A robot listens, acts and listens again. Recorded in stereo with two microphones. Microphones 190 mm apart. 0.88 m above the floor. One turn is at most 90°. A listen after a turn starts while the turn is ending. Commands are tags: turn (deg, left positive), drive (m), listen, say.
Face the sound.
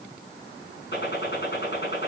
<turn deg="60"/>
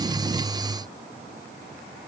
<listen/>
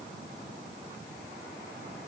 <say>I heard a gunshot, but can't make it out now. It was about straight ahead or 60° left.</say>